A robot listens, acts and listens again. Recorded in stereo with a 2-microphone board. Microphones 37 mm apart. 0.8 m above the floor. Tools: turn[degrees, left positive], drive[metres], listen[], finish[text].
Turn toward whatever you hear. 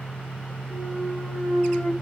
Action: turn[-30]
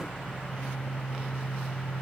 Action: listen[]
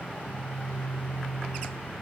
Action: finish[I heard a clunk, but can't make it out now. It was about 20° left or 140° right.]